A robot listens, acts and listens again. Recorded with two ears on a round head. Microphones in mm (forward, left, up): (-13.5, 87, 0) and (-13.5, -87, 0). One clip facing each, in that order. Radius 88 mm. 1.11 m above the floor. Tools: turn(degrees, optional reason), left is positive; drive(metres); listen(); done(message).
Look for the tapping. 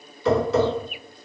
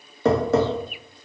turn(degrees=-40, reason="The tapping: about 40° right or 140° right.")
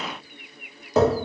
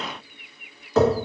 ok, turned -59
turn(degrees=15, reason="So it is at 15° left.")
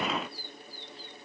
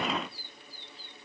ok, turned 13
listen()
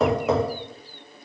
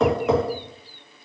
done("Found it: tapping, straight ahead.")